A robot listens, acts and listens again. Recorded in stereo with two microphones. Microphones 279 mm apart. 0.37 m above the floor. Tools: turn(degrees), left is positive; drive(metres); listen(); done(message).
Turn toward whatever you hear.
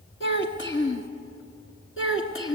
turn(degrees=50)
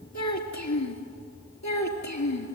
turn(degrees=80)
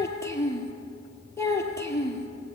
turn(degrees=10)
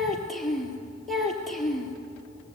done("Found it: a child speaking, straight ahead, over 4 m away.")